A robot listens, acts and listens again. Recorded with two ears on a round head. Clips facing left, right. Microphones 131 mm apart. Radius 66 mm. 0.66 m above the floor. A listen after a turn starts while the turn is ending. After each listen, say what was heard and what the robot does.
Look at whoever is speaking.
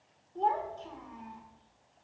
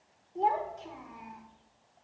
Turn 30° right.
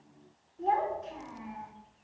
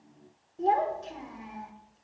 So it is at 135° right. Turn 135° right.
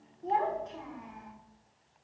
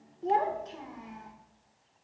The child speaking is now 40° right. Turn 40° right.
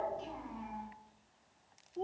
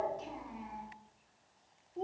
The child speaking is now 10° right. Turn 10° right.
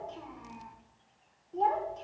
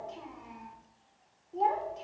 Found it: a child speaking, straight ahead.